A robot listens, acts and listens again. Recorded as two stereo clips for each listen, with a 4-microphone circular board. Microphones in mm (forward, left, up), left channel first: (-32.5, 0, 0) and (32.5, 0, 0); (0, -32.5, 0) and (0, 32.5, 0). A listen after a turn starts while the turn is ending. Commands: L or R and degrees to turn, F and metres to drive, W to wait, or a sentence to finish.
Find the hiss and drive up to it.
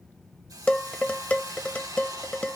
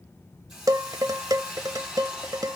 F1.0
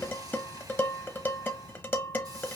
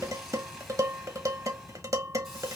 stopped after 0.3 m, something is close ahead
Something is in my way. I am facing the hiss but have not reached it.